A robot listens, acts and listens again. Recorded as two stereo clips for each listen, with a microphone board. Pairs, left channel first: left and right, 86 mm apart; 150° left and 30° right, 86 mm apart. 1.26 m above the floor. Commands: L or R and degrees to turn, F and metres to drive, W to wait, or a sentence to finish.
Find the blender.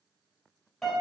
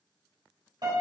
W
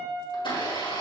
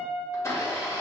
L100
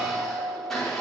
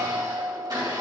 Facing the blender.